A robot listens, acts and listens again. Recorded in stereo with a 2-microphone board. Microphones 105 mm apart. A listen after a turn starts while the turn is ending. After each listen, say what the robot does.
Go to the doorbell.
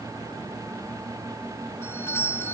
Turn 25° left.
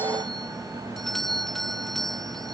Drive 1.0 m forward.
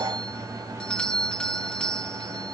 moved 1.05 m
Turn 10° left.
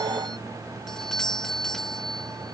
Drive 1.0 m forward.
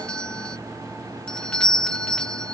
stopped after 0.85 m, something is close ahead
Turn 10° left.
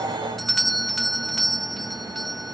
I am next to the doorbell.